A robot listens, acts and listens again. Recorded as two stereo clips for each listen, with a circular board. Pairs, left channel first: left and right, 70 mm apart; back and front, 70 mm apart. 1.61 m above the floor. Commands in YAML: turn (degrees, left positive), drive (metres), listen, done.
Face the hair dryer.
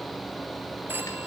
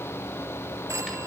listen: true
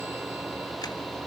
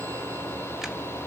listen: true
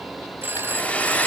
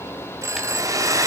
turn: 25
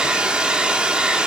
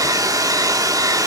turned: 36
turn: -15
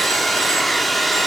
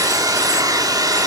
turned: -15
done: "Facing the hair dryer, 1 to 2 m away."